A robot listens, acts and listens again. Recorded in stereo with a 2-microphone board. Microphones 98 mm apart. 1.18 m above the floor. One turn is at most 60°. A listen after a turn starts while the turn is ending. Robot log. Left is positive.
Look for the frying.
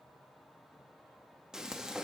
cmd yaw -30
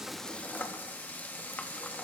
note: So it is at 20° left.
cmd yaw +20
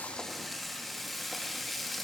end: Facing the frying, under 1 m away.